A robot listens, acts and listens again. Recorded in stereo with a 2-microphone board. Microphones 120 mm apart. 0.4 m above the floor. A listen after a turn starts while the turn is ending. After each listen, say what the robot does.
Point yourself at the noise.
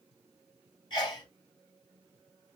Turn 40° left.
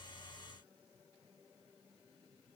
Keep listening.
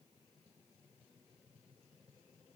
I heard a sneeze, but can't make it out now. It was about straight ahead or 100° left.